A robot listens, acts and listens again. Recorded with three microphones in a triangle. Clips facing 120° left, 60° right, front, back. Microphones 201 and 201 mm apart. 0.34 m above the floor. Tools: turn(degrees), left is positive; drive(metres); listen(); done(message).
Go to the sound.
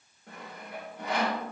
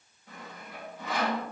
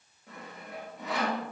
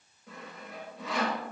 turn(degrees=90)
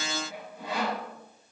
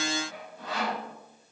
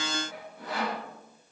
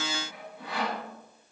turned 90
turn(degrees=45)
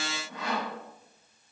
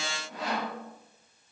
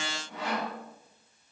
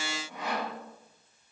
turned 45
drive(metres=1.0)
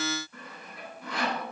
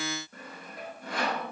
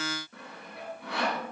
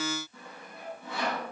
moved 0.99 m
turn(degrees=-10)
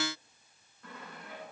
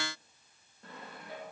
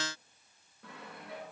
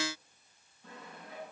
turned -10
drive(metres=1.0)
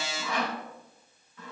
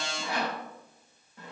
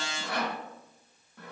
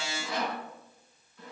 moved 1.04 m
turn(degrees=-10)
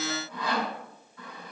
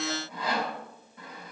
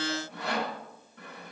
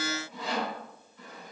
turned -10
drive(metres=1.0)
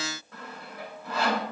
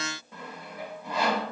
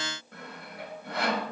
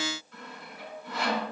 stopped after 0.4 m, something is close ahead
turn(degrees=10)
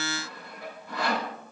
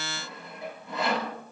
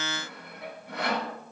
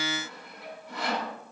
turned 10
done("I am next to the sawing.")